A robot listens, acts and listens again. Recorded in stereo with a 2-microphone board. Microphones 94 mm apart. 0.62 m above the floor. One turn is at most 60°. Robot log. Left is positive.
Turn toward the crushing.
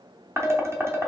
cmd idle
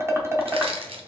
cmd yaw -60
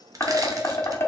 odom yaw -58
note: Nothing new. It was at 30° right.
cmd yaw -30
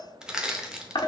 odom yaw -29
note: The crushing is now 10° right.
cmd yaw -10
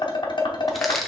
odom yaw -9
end: Found it: crushing, straight ahead, under 1 m away.